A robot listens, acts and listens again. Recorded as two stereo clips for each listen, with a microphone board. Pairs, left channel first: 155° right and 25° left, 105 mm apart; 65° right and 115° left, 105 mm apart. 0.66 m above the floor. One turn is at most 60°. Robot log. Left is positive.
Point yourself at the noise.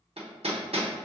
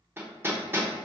note: The hammering: 45° left.
cmd yaw +45
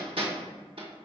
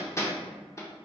end: Facing the hammering, under 1 m away.